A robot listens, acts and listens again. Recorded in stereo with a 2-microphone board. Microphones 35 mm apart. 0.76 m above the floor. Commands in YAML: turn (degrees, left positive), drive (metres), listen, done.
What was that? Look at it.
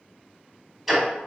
turn: 30
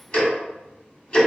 turn: 150
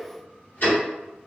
turn: 45
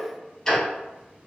turn: 10
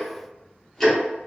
done: "Found it: ticking, straight ahead, 1 to 2 m away."